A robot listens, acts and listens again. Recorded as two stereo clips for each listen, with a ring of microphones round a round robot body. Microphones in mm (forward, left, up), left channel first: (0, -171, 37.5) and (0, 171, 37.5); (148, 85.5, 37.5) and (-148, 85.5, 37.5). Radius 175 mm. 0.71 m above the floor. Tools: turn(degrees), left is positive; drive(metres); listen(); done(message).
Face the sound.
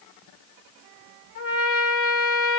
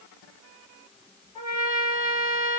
turn(degrees=-45)
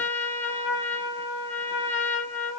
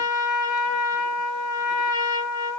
done("Facing the trumpet, 1 to 2 m away.")